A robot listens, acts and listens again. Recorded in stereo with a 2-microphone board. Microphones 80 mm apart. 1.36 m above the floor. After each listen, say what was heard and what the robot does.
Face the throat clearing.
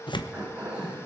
The throat clearing: about 20° right or 160° right. Turn 20° right.
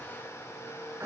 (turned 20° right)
So it is at 140° right. Turn 140° right.
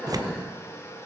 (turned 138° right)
Facing the throat clearing.